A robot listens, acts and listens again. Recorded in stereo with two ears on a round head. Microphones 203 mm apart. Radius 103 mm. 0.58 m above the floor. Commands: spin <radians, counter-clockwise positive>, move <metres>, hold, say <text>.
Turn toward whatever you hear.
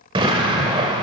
spin -0.35
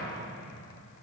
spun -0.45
hold
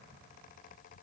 say I heard an explosion, but can't make it out now. It was about 5° left or 130° right.